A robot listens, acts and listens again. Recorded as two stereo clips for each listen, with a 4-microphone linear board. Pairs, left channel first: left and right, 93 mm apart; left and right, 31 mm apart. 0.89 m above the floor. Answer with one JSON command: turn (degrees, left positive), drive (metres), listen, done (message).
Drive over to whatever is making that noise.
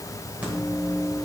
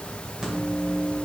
{"turn": -15}
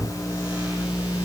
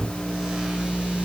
{"turn": -145}
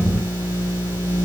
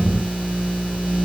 {"turn": -40}
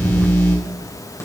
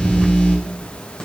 {"turn": 30}
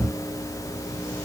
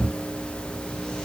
{"turn": 25}
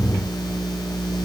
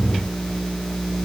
{"drive": 1.0}
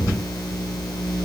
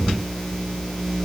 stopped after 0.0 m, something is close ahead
{"done": "Something is in my way. I am facing the microwave but have not reached it."}